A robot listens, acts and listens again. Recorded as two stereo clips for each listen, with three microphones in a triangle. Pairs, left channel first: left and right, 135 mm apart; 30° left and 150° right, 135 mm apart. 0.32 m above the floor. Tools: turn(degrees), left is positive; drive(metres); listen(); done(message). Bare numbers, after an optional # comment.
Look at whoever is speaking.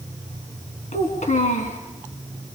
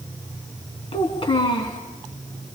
# The child speaking: 80° left.
turn(80)
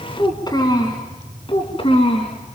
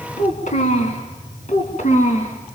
# The child speaking is now 50° left.
turn(50)
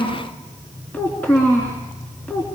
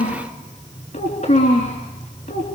# The child speaking is now 10° left.
turn(10)
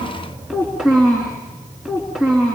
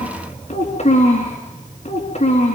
done("Found it: a child speaking, straight ahead.")